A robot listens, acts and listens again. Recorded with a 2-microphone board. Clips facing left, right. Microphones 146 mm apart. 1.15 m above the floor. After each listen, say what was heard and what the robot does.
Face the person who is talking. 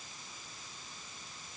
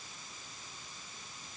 Keep listening.
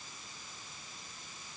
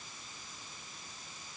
Keep listening.
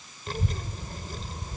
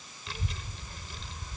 The child speaking: about 40° left or 140° left. Turn 40° left.
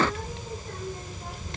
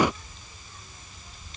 So it is at 110° left. Turn 110° left.
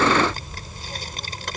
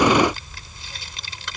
The child speaking is now 45° left. Turn 45° left.
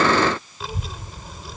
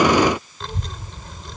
Facing the child speaking.